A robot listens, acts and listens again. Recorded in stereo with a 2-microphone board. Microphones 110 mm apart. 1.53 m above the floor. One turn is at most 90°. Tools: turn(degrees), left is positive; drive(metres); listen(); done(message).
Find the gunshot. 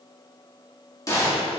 turn(degrees=30)
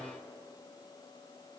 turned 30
listen()
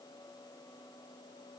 done("I heard a gunshot, but can't make it out now. It was about straight ahead or 120° left.")